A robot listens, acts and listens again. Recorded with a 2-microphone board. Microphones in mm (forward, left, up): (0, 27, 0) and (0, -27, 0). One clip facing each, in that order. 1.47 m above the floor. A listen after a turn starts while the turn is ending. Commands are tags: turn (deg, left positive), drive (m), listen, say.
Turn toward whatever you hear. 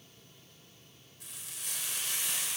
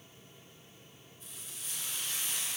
<turn deg="65"/>
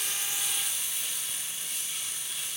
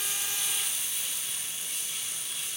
<say>Found it: frying, straight ahead.</say>